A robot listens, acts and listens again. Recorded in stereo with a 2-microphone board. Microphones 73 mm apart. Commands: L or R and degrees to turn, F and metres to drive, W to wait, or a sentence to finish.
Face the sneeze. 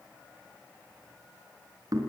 W
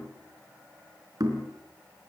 W
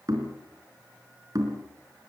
I can't make out a sneeze, only knocking.